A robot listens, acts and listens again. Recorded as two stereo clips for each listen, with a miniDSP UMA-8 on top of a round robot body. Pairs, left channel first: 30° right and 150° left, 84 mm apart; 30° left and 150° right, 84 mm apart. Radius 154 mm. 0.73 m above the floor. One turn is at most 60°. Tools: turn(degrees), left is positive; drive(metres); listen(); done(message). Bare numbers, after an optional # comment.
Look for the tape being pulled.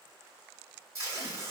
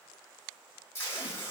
# The tape being pulled: 95° left.
turn(60)
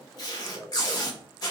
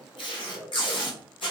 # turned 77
# The tape being pulled is now 15° left.
turn(15)
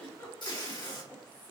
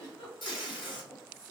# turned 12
done("Found it: tape being pulled, straight ahead, 1 to 2 m away.")